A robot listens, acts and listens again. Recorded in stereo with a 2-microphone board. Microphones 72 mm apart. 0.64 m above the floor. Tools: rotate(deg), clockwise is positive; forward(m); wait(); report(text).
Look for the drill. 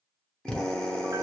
rotate(-30)
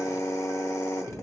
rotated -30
rotate(-135)
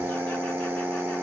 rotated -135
rotate(25)
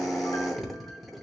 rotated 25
report("Facing the drill, under 1 m away.")